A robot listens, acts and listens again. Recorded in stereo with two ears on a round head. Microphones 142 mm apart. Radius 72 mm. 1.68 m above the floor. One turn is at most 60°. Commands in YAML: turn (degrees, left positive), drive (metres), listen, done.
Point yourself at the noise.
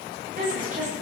turn: -50
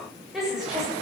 done: "Found it: a woman speaking, straight ahead, over 4 m away."